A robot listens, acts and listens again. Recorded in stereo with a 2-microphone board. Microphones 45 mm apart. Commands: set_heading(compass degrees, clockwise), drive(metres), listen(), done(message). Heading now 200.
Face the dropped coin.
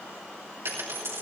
set_heading(290)
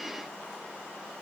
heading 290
done("Facing where the dropped coin came from. I can't hear it now.")